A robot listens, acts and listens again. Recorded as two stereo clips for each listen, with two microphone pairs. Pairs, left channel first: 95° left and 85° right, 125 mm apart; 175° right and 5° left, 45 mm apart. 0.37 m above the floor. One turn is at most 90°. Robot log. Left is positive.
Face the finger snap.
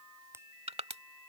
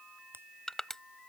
note: The finger snap: 20° right.
cmd yaw -20
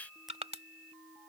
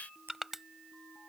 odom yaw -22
cmd idle
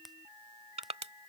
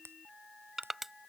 end: Found it: a finger snap, straight ahead.